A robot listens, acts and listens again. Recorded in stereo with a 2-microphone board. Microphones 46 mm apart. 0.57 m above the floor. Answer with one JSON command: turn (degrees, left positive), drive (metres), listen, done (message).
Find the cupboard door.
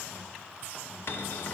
{"turn": 60}
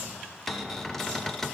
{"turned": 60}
{"done": "Found it: a cupboard door, straight ahead, under 1 m away."}